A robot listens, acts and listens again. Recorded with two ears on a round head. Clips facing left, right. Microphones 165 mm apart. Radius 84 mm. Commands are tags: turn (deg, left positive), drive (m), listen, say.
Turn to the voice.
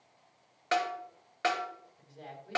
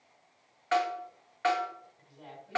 <turn deg="65"/>
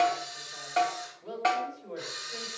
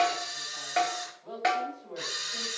<turn deg="35"/>
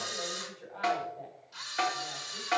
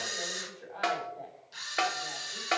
<turn deg="-20"/>
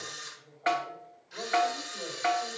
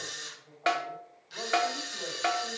<say>Found it: a woman speaking, straight ahead.</say>